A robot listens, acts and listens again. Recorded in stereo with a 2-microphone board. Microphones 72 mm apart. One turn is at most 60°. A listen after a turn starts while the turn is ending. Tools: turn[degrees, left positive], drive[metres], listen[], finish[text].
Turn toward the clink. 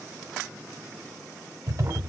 Action: listen[]
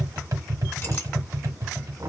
Action: listen[]
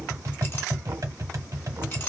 Action: finish[I can't make out a clink, only tapping and knocking.]